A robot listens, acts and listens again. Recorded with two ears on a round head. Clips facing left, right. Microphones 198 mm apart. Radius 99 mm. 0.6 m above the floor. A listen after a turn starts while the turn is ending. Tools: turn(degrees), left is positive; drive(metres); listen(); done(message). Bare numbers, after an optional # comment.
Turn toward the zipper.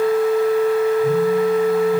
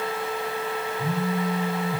listen()
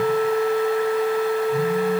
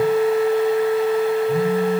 listen()
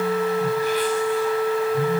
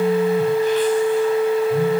done("I can't make out a zipper to turn to.")